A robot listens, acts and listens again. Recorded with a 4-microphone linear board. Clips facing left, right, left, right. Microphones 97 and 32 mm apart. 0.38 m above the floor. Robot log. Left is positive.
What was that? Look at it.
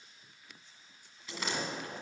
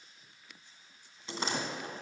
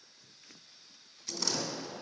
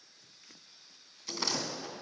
note: The door slam: about 30° right or 150° right.
cmd yaw -30
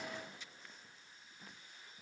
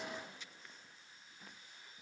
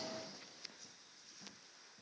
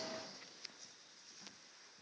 cmd idle
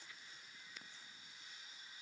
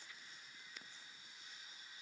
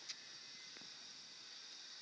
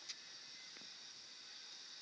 end: I heard a door slam, but can't make it out now. It was about straight ahead or 120° right.